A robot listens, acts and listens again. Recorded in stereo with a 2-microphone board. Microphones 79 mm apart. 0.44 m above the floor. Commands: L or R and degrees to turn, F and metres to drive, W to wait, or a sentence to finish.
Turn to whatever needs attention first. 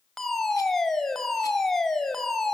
L30
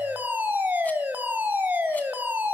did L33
R25
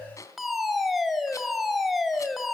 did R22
Facing the fire alarm.